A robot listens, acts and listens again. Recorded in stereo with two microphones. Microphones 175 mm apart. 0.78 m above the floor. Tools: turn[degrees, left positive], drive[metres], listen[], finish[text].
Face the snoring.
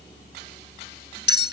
Action: listen[]
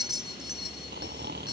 Thought: The snoring: about 65° right or 115° right.
Action: turn[-65]
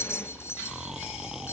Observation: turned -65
Action: finish[Found it: snoring, straight ahead.]